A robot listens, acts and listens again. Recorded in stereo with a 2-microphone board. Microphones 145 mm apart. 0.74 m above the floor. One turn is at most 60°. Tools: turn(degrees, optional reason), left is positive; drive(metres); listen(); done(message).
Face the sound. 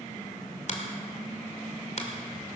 turn(degrees=55, reason="The finger snap: about 55° left or 125° left.")
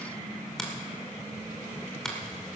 done("Facing the finger snap, 2 to 4 m away.")